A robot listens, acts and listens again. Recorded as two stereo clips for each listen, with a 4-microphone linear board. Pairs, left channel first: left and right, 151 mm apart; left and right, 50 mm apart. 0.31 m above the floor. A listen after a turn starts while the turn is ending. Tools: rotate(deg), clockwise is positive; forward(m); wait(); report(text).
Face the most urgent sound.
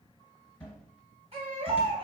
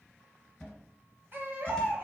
rotate(45)
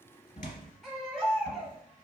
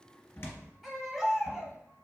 report("Found it: a baby crying, straight ahead.")